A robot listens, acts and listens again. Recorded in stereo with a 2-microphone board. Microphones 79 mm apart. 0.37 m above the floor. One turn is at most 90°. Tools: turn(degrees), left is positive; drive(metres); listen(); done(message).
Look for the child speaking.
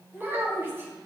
turn(degrees=-30)
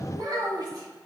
turn(degrees=-90)
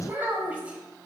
turn(degrees=-15)
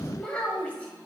turn(degrees=25)
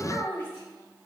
turn(degrees=30)
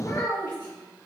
turn(degrees=30)
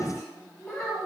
done("Facing the child speaking.")